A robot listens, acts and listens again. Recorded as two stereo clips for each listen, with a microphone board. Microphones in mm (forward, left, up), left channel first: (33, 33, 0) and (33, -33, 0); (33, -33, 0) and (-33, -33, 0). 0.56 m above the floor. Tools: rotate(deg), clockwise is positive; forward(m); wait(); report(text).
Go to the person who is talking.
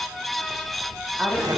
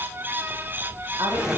wait()
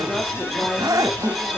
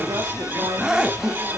wait()
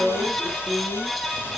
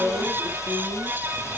rotate(170)
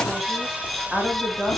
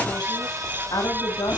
forward(1.0)
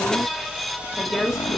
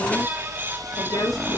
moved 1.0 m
forward(1.0)
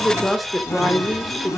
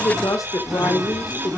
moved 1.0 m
forward(1.0)
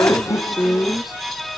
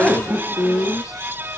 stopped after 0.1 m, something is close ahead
report("I am next to the woman speaking.")